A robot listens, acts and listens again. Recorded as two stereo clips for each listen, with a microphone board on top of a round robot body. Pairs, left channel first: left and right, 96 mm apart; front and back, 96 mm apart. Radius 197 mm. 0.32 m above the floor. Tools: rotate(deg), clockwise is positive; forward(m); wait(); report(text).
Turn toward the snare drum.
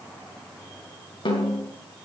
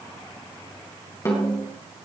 rotate(-60)
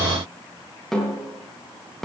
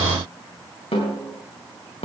report("Facing the snare drum, over 4 m away.")